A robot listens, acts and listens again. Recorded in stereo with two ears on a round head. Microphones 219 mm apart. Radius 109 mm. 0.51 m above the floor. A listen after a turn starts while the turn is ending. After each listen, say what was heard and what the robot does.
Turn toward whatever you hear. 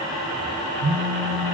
The phone buzzing: about 60° right or 120° right. Turn 60° right.
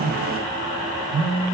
Found it: a phone buzzing, straight ahead.